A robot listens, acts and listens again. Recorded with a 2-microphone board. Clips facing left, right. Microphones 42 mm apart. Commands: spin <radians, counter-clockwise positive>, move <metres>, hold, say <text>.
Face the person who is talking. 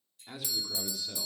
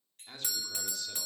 spin 0.52
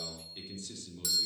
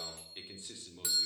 spin -0.35
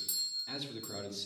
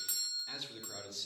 say Found it: a man speaking, straight ahead, 2 to 4 m away.